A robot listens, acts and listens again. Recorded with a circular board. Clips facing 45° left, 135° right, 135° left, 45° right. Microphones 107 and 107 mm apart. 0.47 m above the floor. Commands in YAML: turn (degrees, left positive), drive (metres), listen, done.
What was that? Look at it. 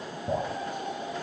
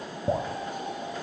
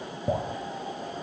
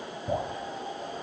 turn: -175
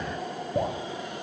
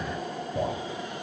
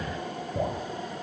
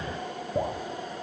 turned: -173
done: "Found it: dripping, straight ahead, 1 to 2 m away."